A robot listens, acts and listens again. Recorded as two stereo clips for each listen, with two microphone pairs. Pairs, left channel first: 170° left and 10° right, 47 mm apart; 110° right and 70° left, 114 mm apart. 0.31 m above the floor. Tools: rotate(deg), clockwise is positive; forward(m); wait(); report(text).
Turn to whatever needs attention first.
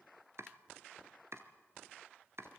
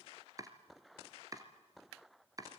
wait()
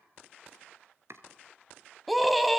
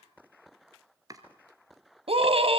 rotate(-80)
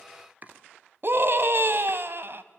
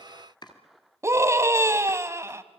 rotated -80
rotate(-10)
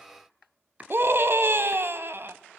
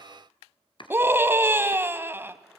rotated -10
report("Found it: a scream, straight ahead, 1 to 2 m away.")